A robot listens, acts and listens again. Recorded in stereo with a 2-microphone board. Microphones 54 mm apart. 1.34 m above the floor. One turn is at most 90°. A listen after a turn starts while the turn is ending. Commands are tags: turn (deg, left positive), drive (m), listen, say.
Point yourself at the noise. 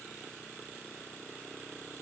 <listen/>
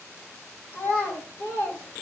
<turn deg="50"/>
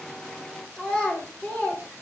<turn deg="25"/>
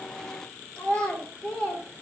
<turn deg="20"/>
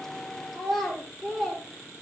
<say>Facing the child speaking, 2 to 4 m away.</say>